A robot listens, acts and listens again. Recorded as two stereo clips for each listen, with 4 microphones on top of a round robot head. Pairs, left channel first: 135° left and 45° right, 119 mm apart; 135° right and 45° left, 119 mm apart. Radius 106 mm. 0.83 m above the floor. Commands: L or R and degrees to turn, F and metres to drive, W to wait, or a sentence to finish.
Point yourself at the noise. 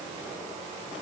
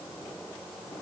W
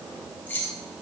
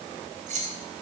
L60
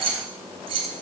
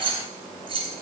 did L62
Facing the keys jangling.